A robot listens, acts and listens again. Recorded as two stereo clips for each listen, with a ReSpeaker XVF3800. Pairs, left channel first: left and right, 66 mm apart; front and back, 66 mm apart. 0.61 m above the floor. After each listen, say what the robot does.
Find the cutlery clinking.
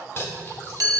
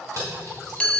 Turn 145° left.
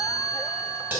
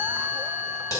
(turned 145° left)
Turn 25° right.
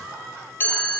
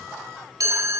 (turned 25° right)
Keep listening.
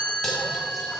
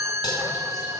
Keep listening.
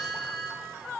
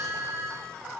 I heard cutlery clinking from this way, but can't make it out now.